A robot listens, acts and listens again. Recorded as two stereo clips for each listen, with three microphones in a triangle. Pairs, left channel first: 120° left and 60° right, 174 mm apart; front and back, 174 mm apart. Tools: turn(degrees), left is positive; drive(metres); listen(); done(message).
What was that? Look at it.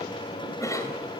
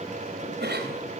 turn(degrees=-170)
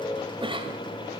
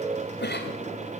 done("Facing the cough.")